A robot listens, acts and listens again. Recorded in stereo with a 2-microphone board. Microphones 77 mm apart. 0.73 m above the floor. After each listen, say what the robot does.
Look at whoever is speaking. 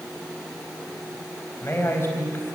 Turn 35° left.
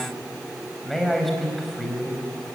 Facing the man speaking, over 4 m away.